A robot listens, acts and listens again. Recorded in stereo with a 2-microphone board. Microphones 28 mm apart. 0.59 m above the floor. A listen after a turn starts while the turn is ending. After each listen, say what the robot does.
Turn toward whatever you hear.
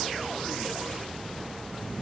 Keep listening.
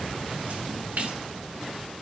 Turn 70° right.
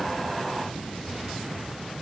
Keep listening.
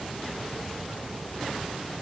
I heard a splash, but can't make it out now. It was about straight ahead or 40° right.